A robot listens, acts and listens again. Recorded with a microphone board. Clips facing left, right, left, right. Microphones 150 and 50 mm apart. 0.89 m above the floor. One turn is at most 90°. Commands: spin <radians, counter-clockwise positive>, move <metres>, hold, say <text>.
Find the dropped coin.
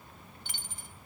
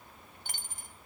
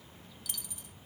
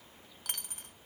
spin -0.87
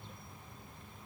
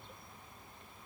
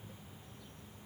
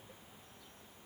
hold
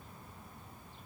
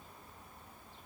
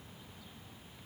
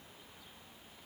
say I heard a dropped coin, but can't make it out now. It was about straight ahead or 80° right.